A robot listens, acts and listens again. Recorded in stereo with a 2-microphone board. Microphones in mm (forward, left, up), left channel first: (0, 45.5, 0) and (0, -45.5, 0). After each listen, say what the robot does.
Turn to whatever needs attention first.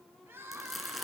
Turn 25° right.
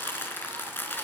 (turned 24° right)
Keep listening.
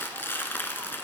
Keep listening.
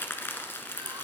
I heard crying, but can't make it out now. It was about straight ahead or 130° right.